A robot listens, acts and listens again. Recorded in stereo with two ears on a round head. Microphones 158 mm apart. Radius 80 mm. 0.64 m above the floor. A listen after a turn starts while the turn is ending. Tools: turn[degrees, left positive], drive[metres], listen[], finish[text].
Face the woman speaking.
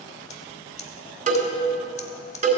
Action: listen[]
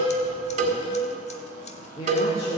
Thought: The woman speaking: about 35° left or 145° left.
Action: turn[35]
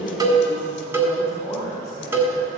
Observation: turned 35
Thought: So it is at 20° left.
Action: turn[20]
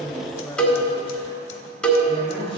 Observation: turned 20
Action: finish[Facing the woman speaking.]